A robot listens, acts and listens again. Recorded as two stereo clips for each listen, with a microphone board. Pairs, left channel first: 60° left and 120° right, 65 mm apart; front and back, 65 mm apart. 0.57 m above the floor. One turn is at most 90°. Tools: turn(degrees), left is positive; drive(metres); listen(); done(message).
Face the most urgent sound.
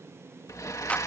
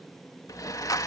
listen()
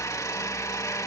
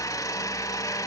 listen()
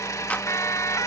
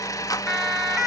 turn(degrees=85)
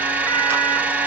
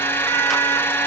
listen()
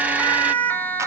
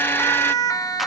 done("Found it: a siren, straight ahead, 2 to 4 m away.")